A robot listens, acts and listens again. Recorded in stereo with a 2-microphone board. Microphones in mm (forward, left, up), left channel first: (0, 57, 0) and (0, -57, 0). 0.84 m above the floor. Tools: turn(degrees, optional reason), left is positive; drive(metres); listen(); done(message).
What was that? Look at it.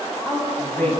turn(degrees=30)
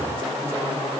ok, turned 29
turn(degrees=140, reason="So it is at 140° left.")
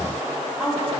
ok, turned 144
done("Facing the woman speaking.")